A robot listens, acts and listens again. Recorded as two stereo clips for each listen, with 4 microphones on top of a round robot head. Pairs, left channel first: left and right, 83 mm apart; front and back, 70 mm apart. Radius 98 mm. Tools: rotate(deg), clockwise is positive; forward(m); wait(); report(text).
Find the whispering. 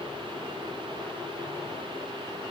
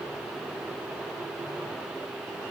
wait()
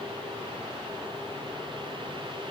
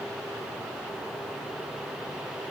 wait()
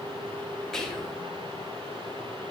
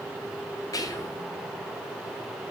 report("Found it: whispering, straight ahead.")